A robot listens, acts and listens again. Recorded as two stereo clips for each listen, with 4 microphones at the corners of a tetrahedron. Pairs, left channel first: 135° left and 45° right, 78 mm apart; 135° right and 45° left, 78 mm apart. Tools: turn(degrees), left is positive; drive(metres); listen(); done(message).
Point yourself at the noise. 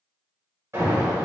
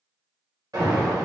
done("Facing the alarm.")